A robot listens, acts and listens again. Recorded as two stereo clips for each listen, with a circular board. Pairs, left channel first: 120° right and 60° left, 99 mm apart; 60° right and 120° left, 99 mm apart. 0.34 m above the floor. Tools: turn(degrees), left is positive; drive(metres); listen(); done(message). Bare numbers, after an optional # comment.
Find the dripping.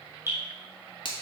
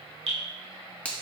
# The dripping: 125° left.
turn(125)
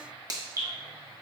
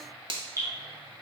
done("Found it: dripping, straight ahead.")